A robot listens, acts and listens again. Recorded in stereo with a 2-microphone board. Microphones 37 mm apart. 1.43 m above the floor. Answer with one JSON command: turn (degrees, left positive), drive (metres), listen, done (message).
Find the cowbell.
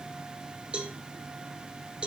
{"turn": -30}
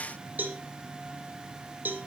{"turn": -120}
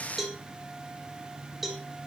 {"turn": -10}
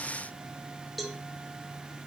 {"done": "Found it: a cowbell, straight ahead."}